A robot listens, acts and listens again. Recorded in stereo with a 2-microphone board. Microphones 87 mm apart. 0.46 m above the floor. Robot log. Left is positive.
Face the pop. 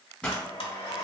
cmd yaw +30
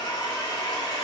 cmd idle
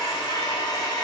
end: I heard a pop, but can't make it out now. It was about 15° right or 135° left.